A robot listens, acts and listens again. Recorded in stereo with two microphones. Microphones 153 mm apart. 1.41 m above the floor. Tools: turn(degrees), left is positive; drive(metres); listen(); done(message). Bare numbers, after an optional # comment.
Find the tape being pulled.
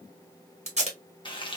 # The tape being pulled: about 45° right or 135° right.
turn(-45)
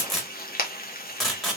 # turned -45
done("Facing the tape being pulled, 1 to 2 m away.")